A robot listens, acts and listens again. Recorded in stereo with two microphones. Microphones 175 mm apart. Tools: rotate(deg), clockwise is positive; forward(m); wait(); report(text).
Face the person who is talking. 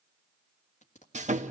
wait()
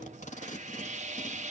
wait()
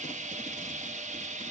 report("I can't make out anyone speaking, only tape being pulled and sawing.")